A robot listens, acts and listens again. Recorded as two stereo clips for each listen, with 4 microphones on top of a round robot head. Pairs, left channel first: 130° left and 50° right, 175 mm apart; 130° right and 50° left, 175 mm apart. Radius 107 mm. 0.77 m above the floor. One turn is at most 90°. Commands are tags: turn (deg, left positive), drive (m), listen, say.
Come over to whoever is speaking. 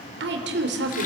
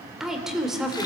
<turn deg="-40"/>
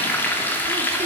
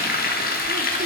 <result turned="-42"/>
<listen/>
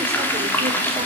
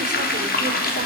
<listen/>
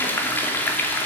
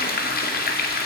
<say>Facing where the woman speaking came from. I can't hear it now. I did not reach it.</say>